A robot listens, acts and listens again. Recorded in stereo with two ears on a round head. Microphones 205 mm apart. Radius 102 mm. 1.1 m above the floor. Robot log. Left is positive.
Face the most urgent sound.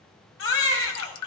note: The baby crying: about 55° left or 125° left.
cmd yaw +55
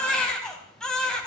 end: Found it: a baby crying, straight ahead, 2 to 4 m away.